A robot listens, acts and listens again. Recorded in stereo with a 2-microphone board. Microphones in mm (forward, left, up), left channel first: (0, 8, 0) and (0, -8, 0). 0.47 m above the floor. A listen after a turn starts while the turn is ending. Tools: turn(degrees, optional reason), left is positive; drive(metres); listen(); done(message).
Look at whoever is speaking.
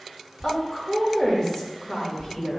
turn(degrees=50, reason="The woman speaking: about 50° left or 130° left.")
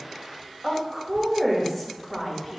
turn(degrees=10, reason="So it is at 10° left.")
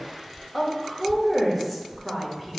done("Facing the woman speaking, 1 to 2 m away.")